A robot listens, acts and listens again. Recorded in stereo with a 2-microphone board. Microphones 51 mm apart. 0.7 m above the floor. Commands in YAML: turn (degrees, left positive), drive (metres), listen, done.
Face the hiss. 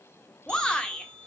listen: true
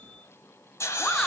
turn: 65
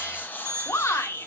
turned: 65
turn: 40
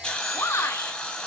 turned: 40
turn: 20
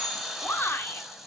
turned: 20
done: "Found it: a hiss, straight ahead, 1 to 2 m away."